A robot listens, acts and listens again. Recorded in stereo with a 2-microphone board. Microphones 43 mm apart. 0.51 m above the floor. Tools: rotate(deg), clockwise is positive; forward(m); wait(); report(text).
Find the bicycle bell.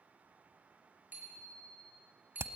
rotate(40)
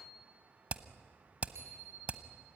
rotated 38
rotate(100)
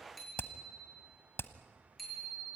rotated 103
report("Found it: a bicycle bell, straight ahead.")